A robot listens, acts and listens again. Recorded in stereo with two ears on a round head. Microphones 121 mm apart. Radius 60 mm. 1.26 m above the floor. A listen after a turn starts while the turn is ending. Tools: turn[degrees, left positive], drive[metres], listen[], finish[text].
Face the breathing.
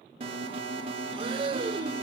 Thought: The breathing: about 40° right or 140° right.
Action: turn[-40]
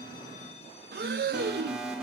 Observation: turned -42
Thought: So it is at 100° right.
Action: turn[-100]
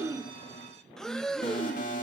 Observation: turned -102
Action: finish[Facing the breathing, under 1 m away.]